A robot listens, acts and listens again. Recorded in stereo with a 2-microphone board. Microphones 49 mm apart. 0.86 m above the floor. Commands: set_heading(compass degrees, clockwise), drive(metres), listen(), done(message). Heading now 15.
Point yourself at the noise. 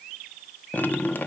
set_heading(335)
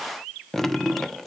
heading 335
done("Found it: dripping, straight ahead, under 1 m away.")